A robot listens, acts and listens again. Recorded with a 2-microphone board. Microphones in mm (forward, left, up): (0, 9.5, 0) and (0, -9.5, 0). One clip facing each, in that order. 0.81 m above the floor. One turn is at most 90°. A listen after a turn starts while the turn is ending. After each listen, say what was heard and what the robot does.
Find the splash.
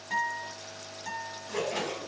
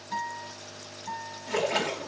The splash: about 60° right or 120° right. Turn 60° right.
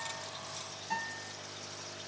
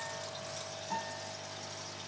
Keep listening.
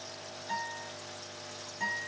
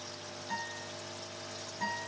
I heard a splash, but can't make it out now. It was about straight ahead or 60° right.